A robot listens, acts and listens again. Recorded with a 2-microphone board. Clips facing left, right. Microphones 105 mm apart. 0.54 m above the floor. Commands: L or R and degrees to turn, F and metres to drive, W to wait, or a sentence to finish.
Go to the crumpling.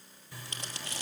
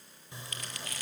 L30
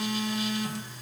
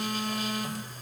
W
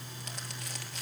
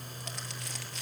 W
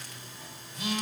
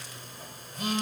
I heard crumpling, but can't make it out now. It was about straight ahead or 120° left. I did not reach it.